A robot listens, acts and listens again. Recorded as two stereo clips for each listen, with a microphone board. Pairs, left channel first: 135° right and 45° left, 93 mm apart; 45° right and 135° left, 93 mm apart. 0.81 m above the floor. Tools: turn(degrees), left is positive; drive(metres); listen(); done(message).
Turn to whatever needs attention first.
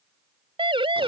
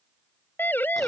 turn(degrees=25)
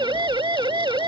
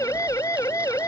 turn(degrees=10)
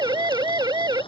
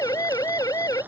done("Facing the siren.")